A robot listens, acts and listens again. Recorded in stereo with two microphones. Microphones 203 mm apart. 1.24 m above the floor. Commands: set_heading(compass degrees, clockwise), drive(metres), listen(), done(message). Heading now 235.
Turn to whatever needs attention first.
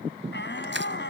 set_heading(165)
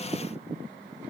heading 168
listen()
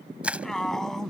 done("Facing the shout.")